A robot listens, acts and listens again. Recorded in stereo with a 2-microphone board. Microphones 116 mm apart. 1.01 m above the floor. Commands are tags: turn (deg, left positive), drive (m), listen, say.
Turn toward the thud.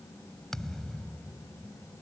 <turn deg="30"/>
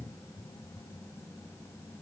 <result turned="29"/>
<listen/>
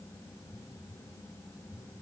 <say>I heard a thud, but can't make it out now. It was about 25° right or 145° left.</say>